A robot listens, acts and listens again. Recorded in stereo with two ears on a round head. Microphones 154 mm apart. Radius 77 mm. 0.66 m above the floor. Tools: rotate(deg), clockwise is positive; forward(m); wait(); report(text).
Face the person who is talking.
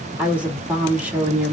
rotate(30)
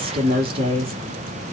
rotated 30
rotate(145)
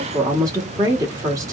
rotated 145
rotate(20)
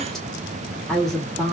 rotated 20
report("Found it: a woman speaking, straight ahead, 1 to 2 m away.")